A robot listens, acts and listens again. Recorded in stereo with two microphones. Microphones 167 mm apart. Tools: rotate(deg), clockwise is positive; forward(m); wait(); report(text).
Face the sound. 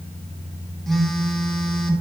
rotate(-30)
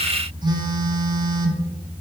rotate(30)
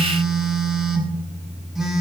report("Found it: a phone buzzing, straight ahead, 1 to 2 m away.")